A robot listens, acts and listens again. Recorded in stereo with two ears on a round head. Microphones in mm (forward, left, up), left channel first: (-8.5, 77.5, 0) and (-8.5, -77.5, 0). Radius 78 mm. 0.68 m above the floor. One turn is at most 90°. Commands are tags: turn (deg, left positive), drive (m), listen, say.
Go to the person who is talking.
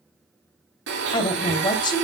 <turn deg="25"/>
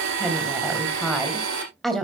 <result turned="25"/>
<drive m="1.0"/>
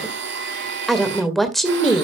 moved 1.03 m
<drive m="1.0"/>
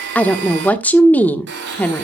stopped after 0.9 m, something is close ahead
<turn deg="10"/>
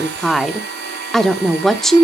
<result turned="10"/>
<say>I am next to the woman speaking.</say>